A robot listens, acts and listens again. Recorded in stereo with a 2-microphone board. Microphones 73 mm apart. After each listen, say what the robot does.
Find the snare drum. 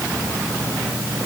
Keep listening.
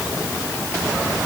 Keep listening.
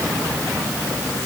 I can't make out a snare drum.